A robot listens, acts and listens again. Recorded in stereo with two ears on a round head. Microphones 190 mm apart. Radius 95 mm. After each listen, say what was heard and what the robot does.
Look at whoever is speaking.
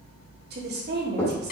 The woman speaking: about 50° right or 130° right. Turn 50° right.
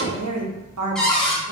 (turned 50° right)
So it is at 80° right. Turn 80° right.
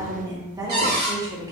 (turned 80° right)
The woman speaking is now 15° right. Turn 15° right.
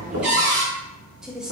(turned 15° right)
Facing the woman speaking, 1 to 2 m away.